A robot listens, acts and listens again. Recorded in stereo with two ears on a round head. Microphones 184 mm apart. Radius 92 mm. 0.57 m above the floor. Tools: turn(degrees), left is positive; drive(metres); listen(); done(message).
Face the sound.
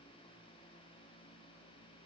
listen()
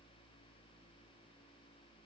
listen()
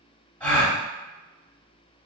turn(degrees=30)
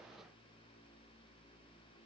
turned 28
listen()
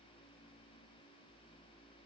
done("I heard a gasp, but can't make it out now. It was about 20° right or 145° left.")